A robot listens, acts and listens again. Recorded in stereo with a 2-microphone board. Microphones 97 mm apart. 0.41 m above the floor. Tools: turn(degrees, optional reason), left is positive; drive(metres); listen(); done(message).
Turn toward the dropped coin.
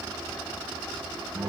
listen()
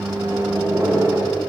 listen()
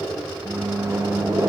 done("I can't make out a dropped coin, only a microwave.")